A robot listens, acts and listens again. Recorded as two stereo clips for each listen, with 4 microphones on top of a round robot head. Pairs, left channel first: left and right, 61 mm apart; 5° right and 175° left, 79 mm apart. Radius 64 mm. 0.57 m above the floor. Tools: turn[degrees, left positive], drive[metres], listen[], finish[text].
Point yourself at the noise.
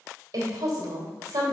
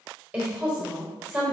Thought: The woman speaking: 110° right.
Action: turn[-110]
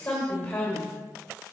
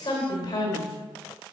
Thought: The woman speaking is now 20° left.
Action: turn[20]
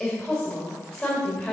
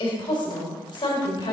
Action: finish[Found it: a woman speaking, straight ahead.]